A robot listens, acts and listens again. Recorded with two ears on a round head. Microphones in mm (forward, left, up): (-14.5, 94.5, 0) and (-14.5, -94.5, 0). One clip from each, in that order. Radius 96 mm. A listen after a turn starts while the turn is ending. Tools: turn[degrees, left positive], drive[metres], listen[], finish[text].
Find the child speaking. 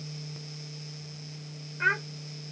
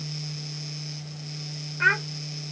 Thought: The child speaking: about 25° right or 155° right.
Action: turn[-25]
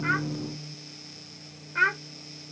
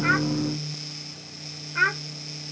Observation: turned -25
Action: finish[Found it: a child speaking, straight ahead.]